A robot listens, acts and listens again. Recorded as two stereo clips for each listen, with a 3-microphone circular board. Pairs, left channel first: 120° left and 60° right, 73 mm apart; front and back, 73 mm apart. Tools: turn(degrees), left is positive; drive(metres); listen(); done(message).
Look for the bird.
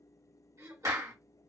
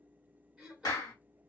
listen()
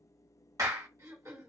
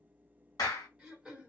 listen()
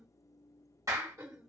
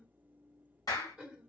done("I can't make out a bird, only throat clearing and a clap.")